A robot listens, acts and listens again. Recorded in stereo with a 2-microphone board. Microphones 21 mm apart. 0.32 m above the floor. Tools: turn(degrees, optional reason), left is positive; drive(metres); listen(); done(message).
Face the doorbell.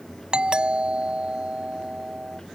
turn(degrees=-50, reason="The doorbell: about 50° right or 130° right.")
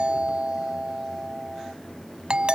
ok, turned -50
turn(degrees=-70, reason="So it is at 70° right.")
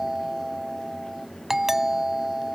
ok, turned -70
turn(degrees=-20, reason="The doorbell is now 20° right.")
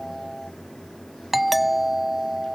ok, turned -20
turn(degrees=-10, reason="The doorbell is now 10° right.")
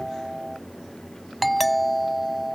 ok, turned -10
done("Facing the doorbell.")